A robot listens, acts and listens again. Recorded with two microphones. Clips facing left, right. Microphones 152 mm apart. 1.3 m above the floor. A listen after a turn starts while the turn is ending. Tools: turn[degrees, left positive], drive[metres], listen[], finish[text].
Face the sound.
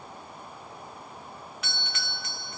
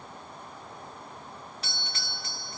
Thought: The doorbell: about 35° right or 145° right.
Action: turn[-35]
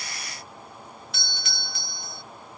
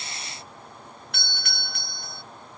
Thought: So it is at 105° right.
Action: turn[-105]
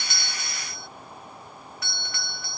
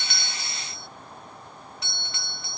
Thought: The doorbell is now 25° right.
Action: turn[-25]
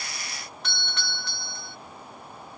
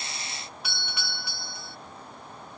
Thought: The doorbell is now 10° right.
Action: turn[-10]
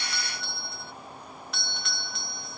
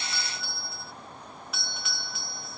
Action: finish[Facing the doorbell.]